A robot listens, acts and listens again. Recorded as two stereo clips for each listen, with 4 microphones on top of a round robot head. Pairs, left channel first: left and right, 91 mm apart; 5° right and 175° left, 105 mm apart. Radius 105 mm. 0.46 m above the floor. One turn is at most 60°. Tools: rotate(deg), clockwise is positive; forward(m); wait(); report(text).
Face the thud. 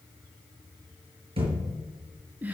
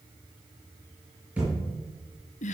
rotate(60)
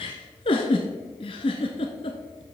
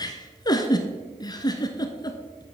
rotate(45)
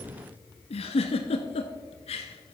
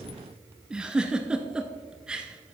report("Facing where the thud came from. I can't hear it now.")